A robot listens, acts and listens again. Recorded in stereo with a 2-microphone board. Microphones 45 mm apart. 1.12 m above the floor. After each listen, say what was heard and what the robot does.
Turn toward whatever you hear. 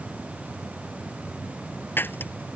The breaking glass: about 50° left or 130° left. Turn 50° left.
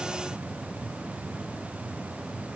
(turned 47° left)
Keep listening.
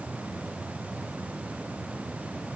I heard breaking glass, but can't make it out now. It was about 5° left or 80° left.